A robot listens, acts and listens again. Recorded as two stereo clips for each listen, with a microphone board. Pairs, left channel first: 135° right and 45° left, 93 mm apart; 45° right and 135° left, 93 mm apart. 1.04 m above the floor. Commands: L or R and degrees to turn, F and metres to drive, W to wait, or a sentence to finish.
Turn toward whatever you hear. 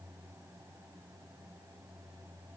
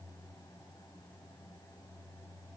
W
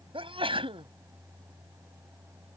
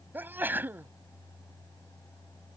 L65
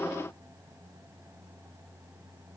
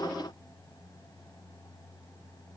I heard a sneeze from this way, but can't make it out now.